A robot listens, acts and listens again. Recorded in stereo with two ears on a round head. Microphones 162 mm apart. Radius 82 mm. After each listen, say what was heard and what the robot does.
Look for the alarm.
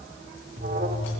The alarm: about 45° right or 135° right. Turn 45° right.
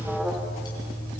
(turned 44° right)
Found it: an alarm, straight ahead.